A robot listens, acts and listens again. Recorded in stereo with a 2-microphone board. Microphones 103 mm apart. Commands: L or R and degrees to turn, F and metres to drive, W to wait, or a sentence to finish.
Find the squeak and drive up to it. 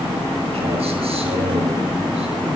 W
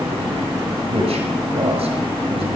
W
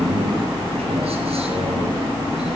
I can't make out a squeak, only a man speaking.